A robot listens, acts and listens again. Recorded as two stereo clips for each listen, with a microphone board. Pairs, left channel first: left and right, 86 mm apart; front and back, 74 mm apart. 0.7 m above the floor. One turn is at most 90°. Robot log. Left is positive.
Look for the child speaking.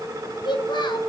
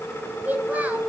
note: The child speaking: 110° left.
cmd yaw +90
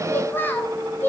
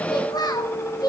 note: The child speaking is now 25° left.
cmd yaw +25
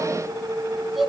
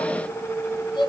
end: Facing the child speaking.